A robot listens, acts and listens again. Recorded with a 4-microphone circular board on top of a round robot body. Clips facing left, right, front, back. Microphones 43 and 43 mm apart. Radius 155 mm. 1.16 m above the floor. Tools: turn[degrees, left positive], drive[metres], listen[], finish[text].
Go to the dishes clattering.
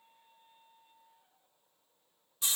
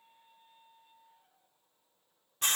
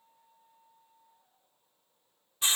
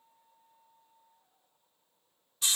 Action: listen[]
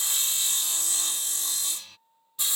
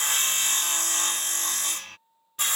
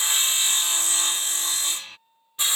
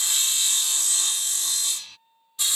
Action: listen[]
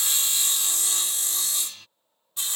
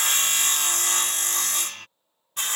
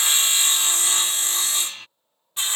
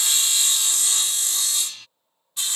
Action: finish[I can't make out dishes clattering, only sawing.]